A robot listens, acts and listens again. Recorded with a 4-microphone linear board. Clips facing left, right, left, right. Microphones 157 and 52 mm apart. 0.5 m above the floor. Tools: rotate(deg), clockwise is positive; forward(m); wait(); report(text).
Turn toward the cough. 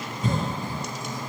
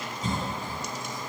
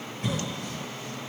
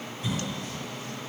rotate(-60)
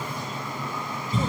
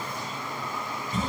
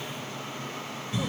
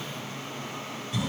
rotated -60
rotate(-35)
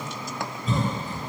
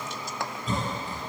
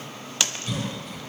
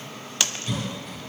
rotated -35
report("Found it: a cough, straight ahead, 2 to 4 m away.")